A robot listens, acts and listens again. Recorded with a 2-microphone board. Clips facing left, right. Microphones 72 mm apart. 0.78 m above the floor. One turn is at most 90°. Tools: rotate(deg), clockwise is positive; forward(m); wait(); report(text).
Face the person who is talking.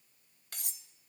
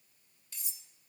wait()
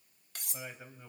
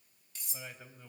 rotate(-30)
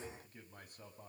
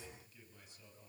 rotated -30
rotate(-90)
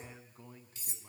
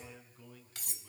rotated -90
rotate(-30)
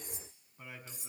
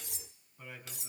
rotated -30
rotate(-10)
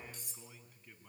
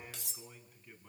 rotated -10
report("Found it: a man speaking, straight ahead, over 4 m away.")